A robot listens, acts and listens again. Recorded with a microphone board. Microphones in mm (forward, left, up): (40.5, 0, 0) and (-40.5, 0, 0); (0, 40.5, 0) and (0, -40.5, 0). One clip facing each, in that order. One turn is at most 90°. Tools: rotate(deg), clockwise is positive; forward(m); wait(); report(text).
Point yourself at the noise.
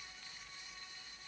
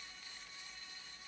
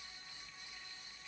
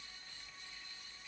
wait()
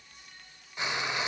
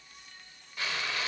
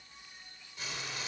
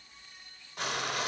rotate(70)
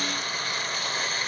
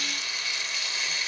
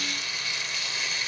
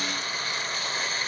rotate(40)
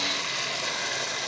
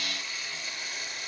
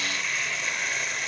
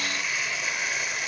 report("Found it: frying, straight ahead.")